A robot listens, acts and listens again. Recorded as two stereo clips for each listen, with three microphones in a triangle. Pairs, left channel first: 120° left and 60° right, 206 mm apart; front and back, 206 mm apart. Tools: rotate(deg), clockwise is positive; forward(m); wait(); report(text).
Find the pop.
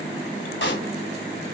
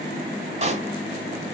rotate(-125)
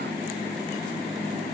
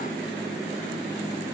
report("Facing where the pop came from. I can't hear it now.")